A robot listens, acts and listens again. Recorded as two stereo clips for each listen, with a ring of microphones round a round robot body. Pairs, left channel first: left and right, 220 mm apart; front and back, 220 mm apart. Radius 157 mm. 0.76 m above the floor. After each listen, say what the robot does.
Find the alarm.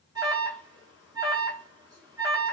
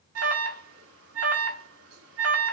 Turn 170° right.
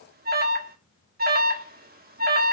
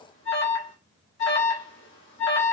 Turn 45° right.
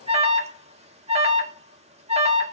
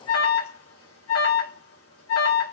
Turn 30° right.
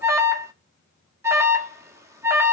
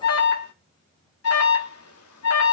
Turn 15° right.
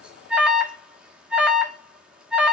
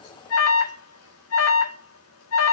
Found it: an alarm, straight ahead, 1 to 2 m away.